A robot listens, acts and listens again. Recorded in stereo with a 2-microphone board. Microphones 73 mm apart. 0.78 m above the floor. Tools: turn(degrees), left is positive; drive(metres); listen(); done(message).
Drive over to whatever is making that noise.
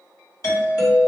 turn(degrees=55)
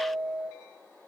turn(degrees=25)
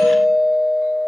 turn(degrees=10)
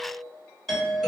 drive(metres=1.0)
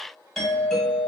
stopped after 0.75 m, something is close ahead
done("Arrived at the doorbell, straight ahead.")